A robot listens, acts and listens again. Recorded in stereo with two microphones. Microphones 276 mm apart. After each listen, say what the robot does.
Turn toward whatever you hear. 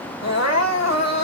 Turn 70° left.
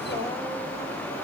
Keep listening.
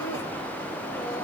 Keep listening.
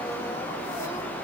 I heard crying, but can't make it out now. It was about straight ahead or 40° left.